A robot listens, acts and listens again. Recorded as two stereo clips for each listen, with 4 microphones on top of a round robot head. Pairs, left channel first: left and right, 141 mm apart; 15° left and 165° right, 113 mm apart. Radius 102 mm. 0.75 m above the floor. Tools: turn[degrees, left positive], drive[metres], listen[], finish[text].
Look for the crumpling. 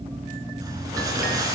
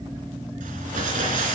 Thought: The crumpling: 160° right.
Action: turn[-160]
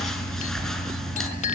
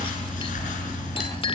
Action: finish[Found it: crumpling, straight ahead, over 4 m away.]